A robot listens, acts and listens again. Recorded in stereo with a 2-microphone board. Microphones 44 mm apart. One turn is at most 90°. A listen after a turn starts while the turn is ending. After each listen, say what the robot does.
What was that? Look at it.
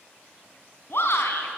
Turn 65° left.
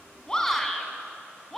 Turn 10° left.
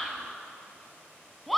Found it: a shout, straight ahead, over 4 m away.